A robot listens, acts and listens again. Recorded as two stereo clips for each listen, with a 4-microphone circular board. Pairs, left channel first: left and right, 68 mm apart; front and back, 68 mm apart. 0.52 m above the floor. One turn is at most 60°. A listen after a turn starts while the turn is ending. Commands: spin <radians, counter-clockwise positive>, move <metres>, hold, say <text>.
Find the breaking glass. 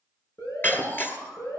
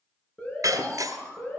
spin 1.05
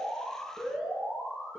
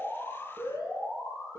spin 1.05
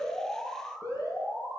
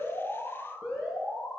spin 0.52
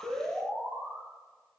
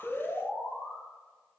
say Facing where the breaking glass came from. I can't hear it now.